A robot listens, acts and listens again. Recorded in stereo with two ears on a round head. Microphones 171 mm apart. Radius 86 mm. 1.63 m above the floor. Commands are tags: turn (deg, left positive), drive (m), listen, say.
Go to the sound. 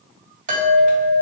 <turn deg="-45"/>
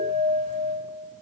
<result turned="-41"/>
<turn deg="-90"/>
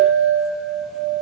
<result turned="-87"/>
<drive m="1.0"/>
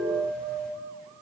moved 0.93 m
<drive m="1.0"/>
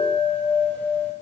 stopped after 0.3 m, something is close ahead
<turn deg="10"/>
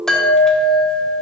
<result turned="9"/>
<say>I am next to the chime.</say>